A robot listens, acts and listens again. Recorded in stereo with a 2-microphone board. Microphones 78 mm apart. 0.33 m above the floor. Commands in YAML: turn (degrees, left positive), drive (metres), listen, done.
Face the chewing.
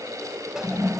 listen: true
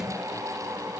listen: true
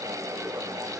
done: "I can't make out chewing to turn to."